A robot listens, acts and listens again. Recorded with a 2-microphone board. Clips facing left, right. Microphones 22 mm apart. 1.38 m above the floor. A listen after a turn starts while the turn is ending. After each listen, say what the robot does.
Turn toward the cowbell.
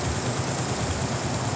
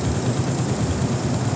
Keep listening.
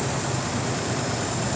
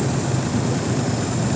Keep listening.
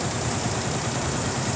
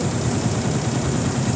I can't make out a cowbell to turn to.